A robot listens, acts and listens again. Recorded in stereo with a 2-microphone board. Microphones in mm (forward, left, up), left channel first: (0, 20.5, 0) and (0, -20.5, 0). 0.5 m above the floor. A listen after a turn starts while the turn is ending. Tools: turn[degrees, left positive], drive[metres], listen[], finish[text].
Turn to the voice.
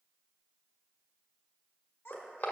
Thought: The child speaking: about 60° left or 120° left.
Action: turn[60]
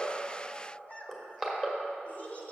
Thought: So it is at 45° left.
Action: turn[45]
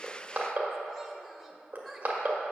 Action: finish[Found it: a child speaking, straight ahead, 1 to 2 m away.]